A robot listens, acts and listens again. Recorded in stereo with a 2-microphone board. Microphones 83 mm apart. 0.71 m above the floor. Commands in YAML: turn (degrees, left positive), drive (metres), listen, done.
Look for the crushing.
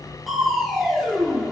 turn: 30
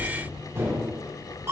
turn: -30
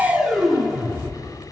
done: "Found it: crushing, straight ahead, 1 to 2 m away."